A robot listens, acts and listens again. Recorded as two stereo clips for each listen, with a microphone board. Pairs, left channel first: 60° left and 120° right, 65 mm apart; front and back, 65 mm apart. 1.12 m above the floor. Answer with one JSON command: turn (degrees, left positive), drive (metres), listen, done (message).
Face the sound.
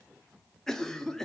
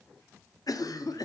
{"turn": -20}
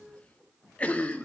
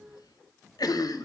{"turn": -10}
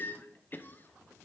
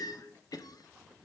{"done": "Facing the cough."}